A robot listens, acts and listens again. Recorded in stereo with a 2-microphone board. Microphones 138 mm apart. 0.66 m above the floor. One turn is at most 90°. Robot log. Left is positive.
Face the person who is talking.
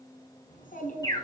cmd yaw +90
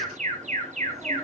cmd idle
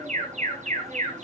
cmd idle
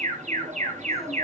end: Facing where the child speaking came from. I can't hear it now.